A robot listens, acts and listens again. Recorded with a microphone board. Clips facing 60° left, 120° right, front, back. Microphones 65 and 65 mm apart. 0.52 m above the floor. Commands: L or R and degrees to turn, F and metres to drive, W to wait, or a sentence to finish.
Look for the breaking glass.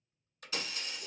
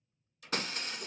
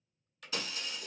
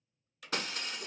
R155
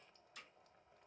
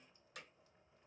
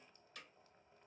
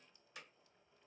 I heard breaking glass from this way, but can't make it out now.